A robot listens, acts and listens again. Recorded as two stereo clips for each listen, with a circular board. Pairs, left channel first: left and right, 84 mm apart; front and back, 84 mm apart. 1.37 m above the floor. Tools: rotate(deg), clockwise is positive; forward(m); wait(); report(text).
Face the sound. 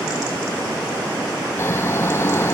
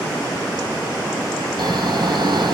rotate(-150)
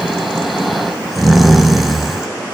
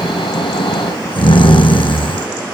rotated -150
report("Found it: snoring, straight ahead.")